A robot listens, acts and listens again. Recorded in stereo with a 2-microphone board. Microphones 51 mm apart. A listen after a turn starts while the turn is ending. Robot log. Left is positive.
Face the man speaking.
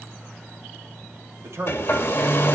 note: The man speaking: about 60° right or 120° right.
cmd yaw -60
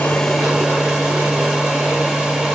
cmd idle
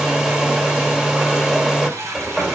cmd idle
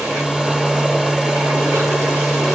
end: I heard a man speaking, but can't make it out now. It was about straight ahead or 60° right.